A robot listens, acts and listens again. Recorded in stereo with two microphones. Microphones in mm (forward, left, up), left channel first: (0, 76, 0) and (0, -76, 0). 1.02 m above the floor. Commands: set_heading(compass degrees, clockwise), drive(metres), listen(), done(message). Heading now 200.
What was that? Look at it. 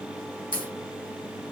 set_heading(140)
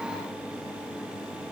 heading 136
listen()
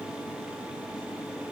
done("I heard a crack, but can't make it out now. It was about straight ahead or 55° left.")